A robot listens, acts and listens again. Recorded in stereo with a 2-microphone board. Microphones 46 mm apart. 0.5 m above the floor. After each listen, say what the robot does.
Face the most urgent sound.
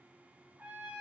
Keep listening.
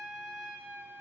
Keep listening.
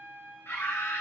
Turn 55° left.
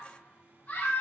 Turn 50° left.
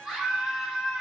Facing the scream.